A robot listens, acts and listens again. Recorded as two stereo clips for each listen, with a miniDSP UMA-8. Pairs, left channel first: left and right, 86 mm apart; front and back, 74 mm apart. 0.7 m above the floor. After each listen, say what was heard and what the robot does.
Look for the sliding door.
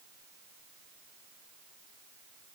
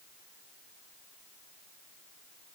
Keep listening.
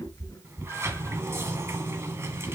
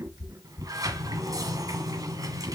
The sliding door: 150° right. Turn 150° right.
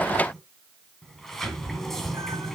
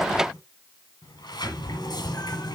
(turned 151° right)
Facing the sliding door, 1 to 2 m away.